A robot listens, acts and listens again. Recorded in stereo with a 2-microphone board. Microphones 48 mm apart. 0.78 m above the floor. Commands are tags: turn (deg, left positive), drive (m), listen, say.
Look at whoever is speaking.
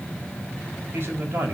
<turn deg="-50"/>
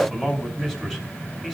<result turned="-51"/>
<say>Found it: a man speaking, straight ahead.</say>